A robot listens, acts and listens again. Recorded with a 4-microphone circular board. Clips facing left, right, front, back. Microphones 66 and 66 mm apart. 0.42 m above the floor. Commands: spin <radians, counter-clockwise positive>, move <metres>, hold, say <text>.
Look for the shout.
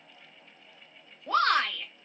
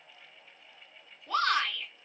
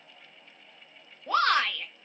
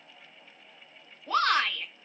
spin 0.79
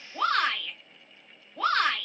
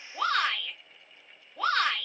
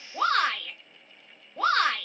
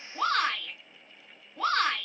say Found it: a shout, straight ahead, 1 to 2 m away.